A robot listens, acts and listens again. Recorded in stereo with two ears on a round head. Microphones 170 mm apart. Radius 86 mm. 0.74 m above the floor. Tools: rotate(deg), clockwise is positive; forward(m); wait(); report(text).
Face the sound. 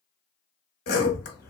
rotate(-55)
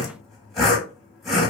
report("Found it: sawing, straight ahead, under 1 m away.")